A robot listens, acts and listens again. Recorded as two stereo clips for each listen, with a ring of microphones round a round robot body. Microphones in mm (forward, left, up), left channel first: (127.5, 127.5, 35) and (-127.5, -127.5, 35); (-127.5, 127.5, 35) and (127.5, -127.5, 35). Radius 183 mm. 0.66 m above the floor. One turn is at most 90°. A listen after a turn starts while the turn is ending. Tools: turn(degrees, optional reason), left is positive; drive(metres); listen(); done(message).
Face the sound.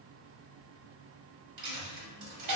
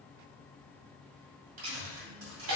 turn(degrees=-90, reason="The dropped coin: 95° right.")
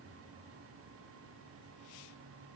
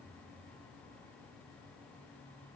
done("Facing where the dropped coin came from. I can't hear it now.")